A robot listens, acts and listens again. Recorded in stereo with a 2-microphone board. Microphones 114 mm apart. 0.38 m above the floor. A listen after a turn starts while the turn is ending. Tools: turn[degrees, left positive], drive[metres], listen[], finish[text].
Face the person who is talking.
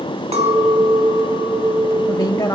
Thought: The woman speaking: about 30° left or 150° left.
Action: turn[30]
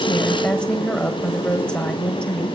Thought: So it is at 10° left.
Action: turn[10]
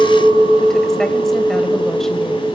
Action: listen[]
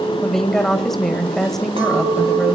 Action: finish[Found it: a woman speaking, straight ahead.]